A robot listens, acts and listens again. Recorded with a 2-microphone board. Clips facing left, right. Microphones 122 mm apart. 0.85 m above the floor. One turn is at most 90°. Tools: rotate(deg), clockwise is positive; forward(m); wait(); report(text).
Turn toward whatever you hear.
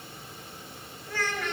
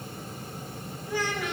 rotate(30)
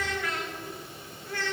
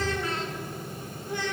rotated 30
rotate(30)
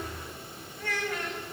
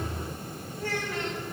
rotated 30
rotate(90)
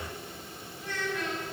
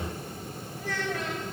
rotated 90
rotate(85)
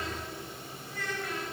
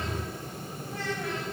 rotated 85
rotate(30)
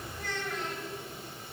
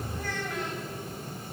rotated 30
report("Facing the child speaking, 2 to 4 m away.")